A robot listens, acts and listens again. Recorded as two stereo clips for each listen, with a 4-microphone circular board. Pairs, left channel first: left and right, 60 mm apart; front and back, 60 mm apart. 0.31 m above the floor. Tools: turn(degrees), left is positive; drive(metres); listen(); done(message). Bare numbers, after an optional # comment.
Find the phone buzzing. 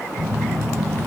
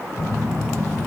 done("Facing the phone buzzing, 1 to 2 m away.")